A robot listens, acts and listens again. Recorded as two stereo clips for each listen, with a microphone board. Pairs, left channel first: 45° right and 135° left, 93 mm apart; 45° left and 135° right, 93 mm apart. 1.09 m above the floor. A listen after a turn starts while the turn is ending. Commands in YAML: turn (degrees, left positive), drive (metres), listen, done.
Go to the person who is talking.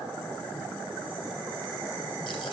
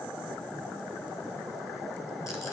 listen: true
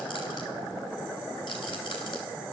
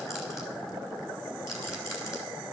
listen: true
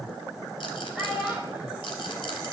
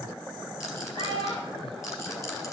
turn: 55
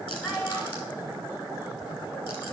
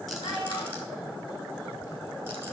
listen: true
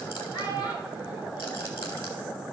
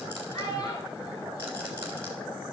drive: 1.0
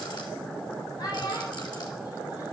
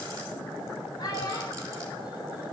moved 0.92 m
drive: 1.0
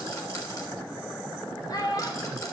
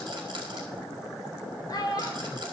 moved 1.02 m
drive: 1.0
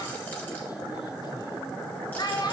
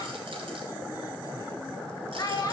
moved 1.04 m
drive: 1.0
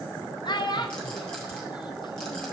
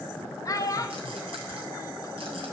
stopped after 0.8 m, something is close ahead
turn: -10
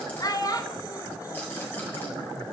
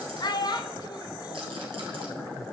done: "I am next to the child speaking."